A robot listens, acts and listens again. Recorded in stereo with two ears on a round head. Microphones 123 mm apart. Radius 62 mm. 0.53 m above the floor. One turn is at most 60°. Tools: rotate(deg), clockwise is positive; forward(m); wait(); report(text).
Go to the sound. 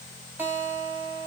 rotate(30)
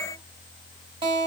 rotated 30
rotate(60)
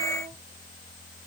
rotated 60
rotate(60)
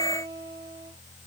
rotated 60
rotate(30)
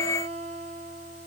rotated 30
rotate(10)
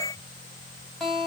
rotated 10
forward(1.0)
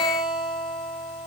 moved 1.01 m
forward(1.0)
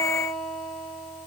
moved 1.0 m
forward(1.0)
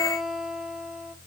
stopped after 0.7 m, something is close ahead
report("Arrived at the guitar, straight ahead.")